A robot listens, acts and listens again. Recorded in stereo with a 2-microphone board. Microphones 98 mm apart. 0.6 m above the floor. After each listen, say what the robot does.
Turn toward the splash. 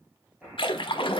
Turn 65° left.
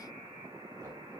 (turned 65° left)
Keep listening.
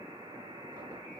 I heard a splash, but can't make it out now. It was about straight ahead or 50° left.